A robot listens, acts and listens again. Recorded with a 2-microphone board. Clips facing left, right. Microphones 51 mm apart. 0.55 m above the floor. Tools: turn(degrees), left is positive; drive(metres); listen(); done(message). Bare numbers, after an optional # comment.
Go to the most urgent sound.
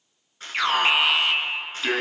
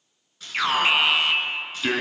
turn(30)
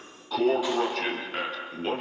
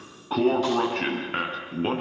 # So it is at 30° right.
turn(-30)
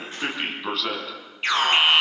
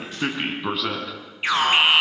# The alarm is now 10° right.
turn(-10)
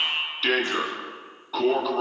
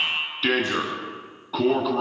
drive(1.0)
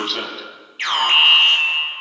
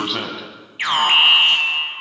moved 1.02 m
# The alarm is now 10° right.
turn(-10)
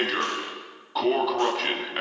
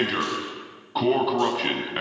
drive(1.0)
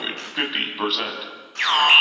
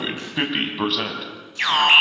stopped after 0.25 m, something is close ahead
done("Something is in my way. I am facing the alarm but have not reached it.")